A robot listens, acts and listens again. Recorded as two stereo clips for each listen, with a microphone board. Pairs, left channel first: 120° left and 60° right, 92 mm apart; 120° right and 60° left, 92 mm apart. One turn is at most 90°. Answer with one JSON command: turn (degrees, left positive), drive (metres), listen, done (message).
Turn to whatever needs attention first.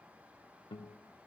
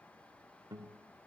{"listen": true}
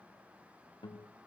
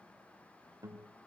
{"listen": true}
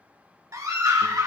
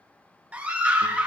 {"turn": -15}
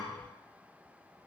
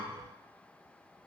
{"listen": true}
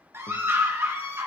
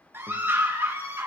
{"done": "Facing the scream, 1 to 2 m away."}